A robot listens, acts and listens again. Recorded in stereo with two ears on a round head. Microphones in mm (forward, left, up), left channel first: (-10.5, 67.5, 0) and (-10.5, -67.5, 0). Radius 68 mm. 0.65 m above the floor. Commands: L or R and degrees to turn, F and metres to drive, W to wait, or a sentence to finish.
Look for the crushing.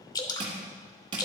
R35
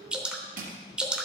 R110
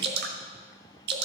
W
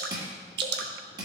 R30
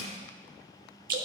Found it: crushing, straight ahead, 1 to 2 m away.